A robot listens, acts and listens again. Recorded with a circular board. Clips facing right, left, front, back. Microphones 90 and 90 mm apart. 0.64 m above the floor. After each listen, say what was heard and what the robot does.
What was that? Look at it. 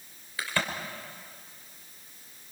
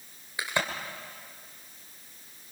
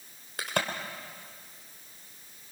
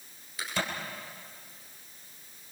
The crack: 20° left. Turn 20° left.
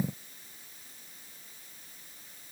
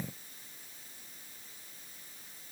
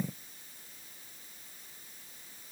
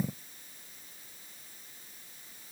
Facing where the crack came from. I can't hear it now.